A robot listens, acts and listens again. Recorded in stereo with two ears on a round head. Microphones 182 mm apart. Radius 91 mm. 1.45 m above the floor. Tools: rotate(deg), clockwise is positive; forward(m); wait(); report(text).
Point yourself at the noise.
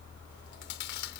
rotate(-60)
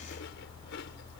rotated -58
wait()
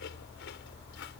wait()
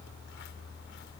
report("I heard chewing, but can't make it out now. It was about straight ahead or 60° left.")